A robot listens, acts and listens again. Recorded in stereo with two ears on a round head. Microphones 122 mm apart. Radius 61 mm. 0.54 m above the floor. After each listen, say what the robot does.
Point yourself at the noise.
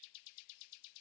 Keep listening.
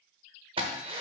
Turn 40° right.
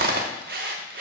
Turn 95° right.
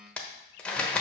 Turn 10° left.
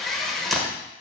Facing the drill.